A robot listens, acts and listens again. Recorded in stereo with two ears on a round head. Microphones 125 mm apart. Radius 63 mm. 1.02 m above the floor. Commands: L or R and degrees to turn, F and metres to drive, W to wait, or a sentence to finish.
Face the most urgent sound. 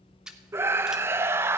R15
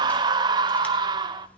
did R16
R150
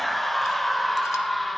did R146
Found it: a scream, straight ahead.